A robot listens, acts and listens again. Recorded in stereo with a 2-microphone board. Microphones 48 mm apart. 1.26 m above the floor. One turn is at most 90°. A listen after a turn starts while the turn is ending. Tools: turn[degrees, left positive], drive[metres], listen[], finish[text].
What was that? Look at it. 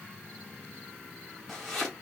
Action: turn[30]
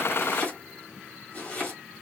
Thought: So it is at 155° left.
Action: turn[90]
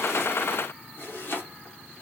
Thought: The chopping is now 50° left.
Action: turn[50]
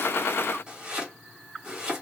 Thought: The chopping is now 20° right.
Action: turn[-20]
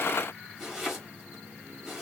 Action: finish[Facing the chopping, 2 to 4 m away.]